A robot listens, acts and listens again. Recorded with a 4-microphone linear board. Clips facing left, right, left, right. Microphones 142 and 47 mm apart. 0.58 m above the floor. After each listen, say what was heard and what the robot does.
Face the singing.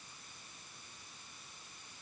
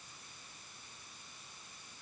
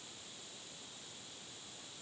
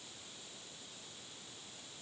Keep listening.
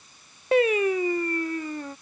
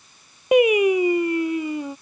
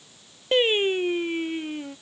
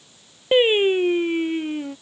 Turn 30° right.
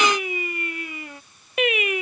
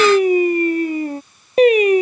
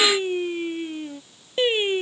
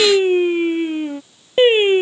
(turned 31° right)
So it is at 145° right. Turn 145° right.
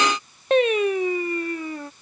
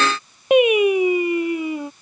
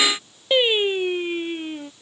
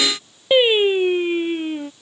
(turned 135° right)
The singing is now 15° right. Turn 15° right.
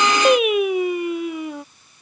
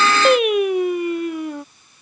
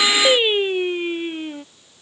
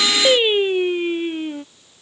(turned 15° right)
Facing the singing.